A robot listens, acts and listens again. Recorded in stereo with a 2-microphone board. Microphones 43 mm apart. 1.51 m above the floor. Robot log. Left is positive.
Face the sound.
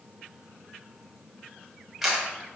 cmd yaw -30
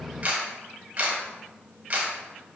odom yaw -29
note: So it is at 150° right.
cmd yaw -150
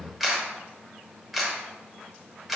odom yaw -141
end: Found it: a camera shutter, straight ahead.